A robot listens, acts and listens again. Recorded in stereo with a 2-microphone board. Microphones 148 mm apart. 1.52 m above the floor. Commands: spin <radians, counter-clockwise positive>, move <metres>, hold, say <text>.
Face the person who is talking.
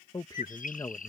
spin 0.44
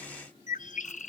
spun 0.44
hold
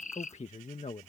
spin 2.27
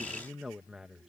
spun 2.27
say Found it: a man speaking, straight ahead.